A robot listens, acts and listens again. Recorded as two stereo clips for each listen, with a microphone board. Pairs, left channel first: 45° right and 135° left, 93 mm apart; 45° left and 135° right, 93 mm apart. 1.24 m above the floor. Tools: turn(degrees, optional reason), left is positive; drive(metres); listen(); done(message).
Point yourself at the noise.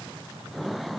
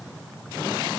listen()
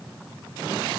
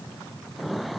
listen()
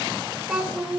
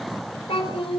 turn(degrees=50, reason="The child speaking: 50° left.")
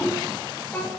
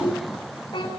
turn(degrees=25, reason="The child speaking is now 25° left.")
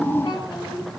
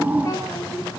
listen()
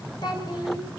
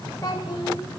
listen()
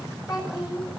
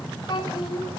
done("Facing the child speaking, over 4 m away.")